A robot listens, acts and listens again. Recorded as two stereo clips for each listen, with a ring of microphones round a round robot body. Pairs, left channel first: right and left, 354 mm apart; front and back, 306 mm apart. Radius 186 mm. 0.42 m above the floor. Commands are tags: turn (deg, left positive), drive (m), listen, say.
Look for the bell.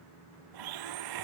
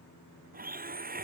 <listen/>
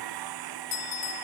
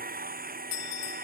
<turn deg="-45"/>
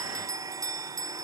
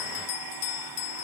<turn deg="10"/>
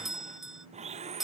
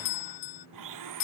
<say>Found it: a bell, straight ahead.</say>